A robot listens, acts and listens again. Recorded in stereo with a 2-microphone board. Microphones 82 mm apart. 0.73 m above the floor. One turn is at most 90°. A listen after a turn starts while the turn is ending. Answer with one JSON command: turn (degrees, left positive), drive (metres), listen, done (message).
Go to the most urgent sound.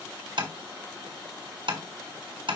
{"listen": true}
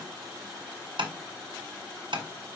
{"listen": true}
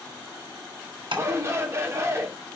{"turn": -35}
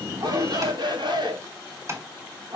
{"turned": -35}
{"turn": -90}
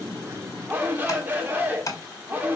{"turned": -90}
{"turn": -25}
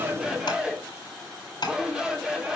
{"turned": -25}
{"turn": -10}
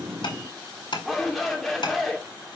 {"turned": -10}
{"drive": 1.0}
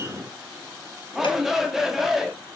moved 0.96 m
{"drive": 1.0}
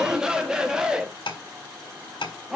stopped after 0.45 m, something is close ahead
{"turn": -10}
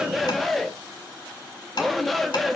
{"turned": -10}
{"done": "Arrived at the shout, straight ahead."}